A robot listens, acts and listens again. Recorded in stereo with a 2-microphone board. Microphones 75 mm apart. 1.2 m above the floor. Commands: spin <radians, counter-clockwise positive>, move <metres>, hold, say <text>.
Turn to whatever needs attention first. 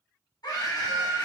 spin 1.05
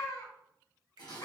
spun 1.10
spin 0.96
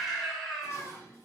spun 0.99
say Facing the scream, 1 to 2 m away.